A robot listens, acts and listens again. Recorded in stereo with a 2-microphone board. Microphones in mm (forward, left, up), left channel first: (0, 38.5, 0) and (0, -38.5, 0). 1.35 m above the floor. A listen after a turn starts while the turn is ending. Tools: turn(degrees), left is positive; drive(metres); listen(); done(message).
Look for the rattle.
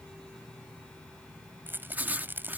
turn(degrees=-25)
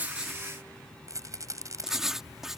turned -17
turn(degrees=-135)
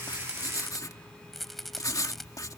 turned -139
done("Facing the rattle.")